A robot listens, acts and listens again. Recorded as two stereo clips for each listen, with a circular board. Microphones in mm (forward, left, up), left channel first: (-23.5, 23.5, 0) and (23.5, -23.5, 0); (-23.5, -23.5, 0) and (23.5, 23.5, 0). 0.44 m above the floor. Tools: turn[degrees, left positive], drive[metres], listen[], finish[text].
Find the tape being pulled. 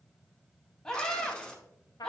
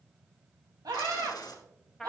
Thought: The tape being pulled: 145° right.
Action: turn[-145]
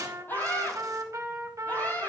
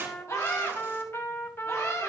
Action: listen[]
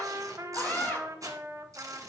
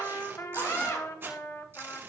Thought: The tape being pulled is now 10° right.
Action: turn[-10]
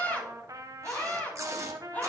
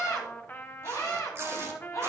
Action: finish[Facing the tape being pulled.]